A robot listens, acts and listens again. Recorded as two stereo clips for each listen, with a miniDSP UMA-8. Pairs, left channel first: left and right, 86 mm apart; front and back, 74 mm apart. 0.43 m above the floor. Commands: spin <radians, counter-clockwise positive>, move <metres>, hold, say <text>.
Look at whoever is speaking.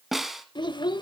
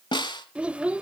spin 1.83
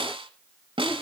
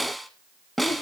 hold
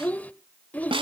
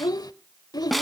spin 0.35
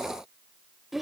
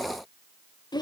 say Facing the child speaking, under 1 m away.